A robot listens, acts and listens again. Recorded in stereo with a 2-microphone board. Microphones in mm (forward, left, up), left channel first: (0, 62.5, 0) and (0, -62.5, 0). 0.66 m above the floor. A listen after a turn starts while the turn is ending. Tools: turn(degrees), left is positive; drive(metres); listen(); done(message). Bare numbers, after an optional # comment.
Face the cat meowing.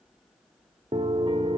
listen()
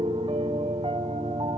listen()
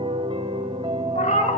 # The cat meowing: about 75° left or 105° left.
turn(75)
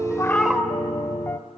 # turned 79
done("Found it: a cat meowing, straight ahead, 1 to 2 m away.")